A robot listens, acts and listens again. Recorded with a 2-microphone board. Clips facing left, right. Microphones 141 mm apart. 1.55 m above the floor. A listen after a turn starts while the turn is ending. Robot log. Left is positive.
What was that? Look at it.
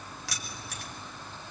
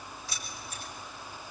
cmd yaw +90
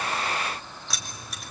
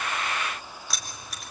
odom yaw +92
end: Facing the keys jangling.